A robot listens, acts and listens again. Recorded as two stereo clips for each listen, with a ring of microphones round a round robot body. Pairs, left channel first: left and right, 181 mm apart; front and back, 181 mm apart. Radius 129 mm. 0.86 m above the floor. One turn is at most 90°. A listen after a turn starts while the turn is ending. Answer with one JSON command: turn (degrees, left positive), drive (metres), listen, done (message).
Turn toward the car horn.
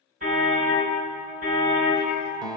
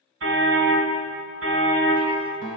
{"turn": -90}
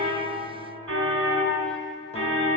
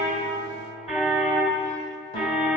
{"turn": -90}
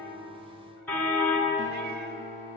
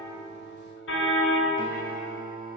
{"turn": 10}
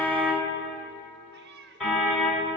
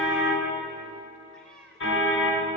{"done": "Facing the car horn, 2 to 4 m away."}